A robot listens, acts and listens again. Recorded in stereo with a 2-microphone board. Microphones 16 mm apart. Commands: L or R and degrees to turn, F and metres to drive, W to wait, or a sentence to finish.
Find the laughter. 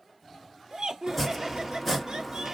R50
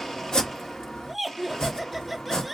Facing the laughter, under 1 m away.